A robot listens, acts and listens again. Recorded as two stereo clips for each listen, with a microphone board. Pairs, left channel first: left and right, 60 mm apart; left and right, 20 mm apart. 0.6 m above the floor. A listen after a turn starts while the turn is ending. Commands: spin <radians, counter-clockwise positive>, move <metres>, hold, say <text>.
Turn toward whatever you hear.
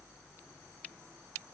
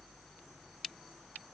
hold
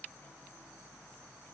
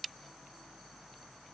hold
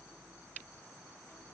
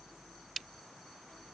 say I can't make out anything to turn to.